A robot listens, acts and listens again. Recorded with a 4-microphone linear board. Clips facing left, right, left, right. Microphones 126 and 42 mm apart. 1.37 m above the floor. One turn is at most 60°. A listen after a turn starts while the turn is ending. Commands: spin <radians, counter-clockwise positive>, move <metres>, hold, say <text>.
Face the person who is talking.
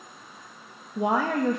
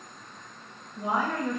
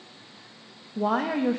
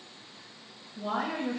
spin 1.05
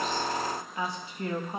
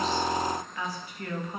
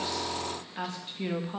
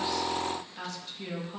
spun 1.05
spin 0.44
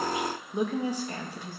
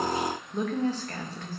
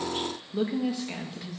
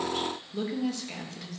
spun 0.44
spin 0.26
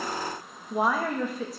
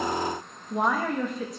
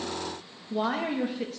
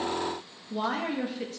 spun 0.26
say Found it: a woman speaking, straight ahead.